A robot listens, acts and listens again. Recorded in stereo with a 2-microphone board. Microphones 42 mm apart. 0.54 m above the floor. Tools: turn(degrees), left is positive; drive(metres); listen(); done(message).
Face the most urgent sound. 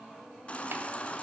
turn(degrees=30)
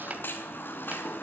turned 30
turn(degrees=115)
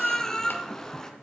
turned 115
turn(degrees=15)
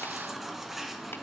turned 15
done("Found it: a baby crying, straight ahead, 2 to 4 m away.")